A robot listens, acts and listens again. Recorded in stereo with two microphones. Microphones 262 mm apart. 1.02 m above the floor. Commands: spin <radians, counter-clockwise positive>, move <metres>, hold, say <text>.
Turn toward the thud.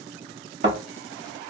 spin -0.52
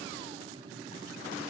hold
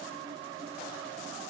say I heard a thud, but can't make it out now. It was about straight ahead or 120° right.